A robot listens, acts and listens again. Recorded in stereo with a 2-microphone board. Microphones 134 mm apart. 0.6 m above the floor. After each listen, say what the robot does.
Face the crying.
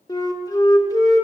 Keep listening.
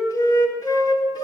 Keep listening.
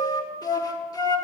I can't make out crying to turn to.